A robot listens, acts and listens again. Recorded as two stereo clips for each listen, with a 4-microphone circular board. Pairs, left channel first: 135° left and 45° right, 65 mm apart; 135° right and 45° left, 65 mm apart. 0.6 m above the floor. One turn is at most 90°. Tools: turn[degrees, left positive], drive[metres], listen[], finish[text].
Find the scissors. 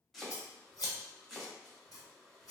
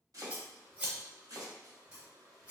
Thought: The scissors: 115° left.
Action: turn[90]
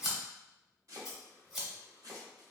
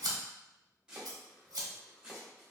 Thought: The scissors is now 45° left.
Action: turn[45]
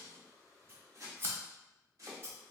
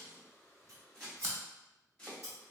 Thought: The scissors is now 10° left.
Action: turn[10]
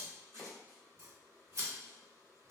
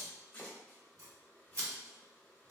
Action: finish[Facing the scissors, under 1 m away.]